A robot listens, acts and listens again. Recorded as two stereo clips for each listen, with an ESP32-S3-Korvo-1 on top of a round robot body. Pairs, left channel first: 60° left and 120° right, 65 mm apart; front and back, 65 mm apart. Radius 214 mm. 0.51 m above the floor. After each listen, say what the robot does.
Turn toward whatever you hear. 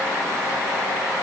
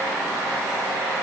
Keep listening.
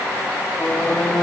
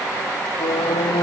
Turn 20° right.
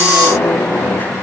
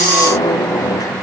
Found it: a squeak, straight ahead.